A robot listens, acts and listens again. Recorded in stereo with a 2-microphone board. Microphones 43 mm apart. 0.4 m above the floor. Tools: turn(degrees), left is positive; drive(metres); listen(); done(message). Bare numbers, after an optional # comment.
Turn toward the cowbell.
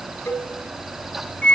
# The cowbell: about 70° left or 110° left.
turn(70)
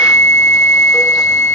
listen()
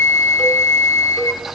listen()
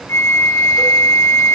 done("I heard a cowbell, but can't make it out now. It was about straight ahead or 40° left.")